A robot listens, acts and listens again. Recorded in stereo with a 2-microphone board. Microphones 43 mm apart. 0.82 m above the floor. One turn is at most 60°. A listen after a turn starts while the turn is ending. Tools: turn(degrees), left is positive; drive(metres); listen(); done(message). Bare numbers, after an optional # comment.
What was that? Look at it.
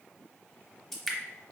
turn(30)
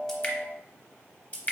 # So it is at 150° left.
turn(60)
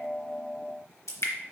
# The dripping is now 90° left.
turn(60)
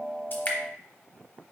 # Nothing new. It was at 30° left.
turn(30)
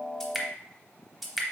done("Found it: dripping, straight ahead, under 1 m away.")